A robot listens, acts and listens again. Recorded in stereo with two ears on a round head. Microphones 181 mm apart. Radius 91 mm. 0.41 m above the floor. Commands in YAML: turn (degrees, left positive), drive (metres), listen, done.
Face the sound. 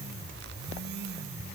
listen: true
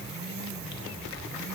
listen: true
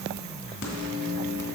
turn: 55
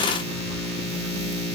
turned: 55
turn: 65
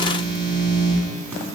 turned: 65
turn: -10
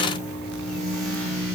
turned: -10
done: "Found it: a microwave, straight ahead."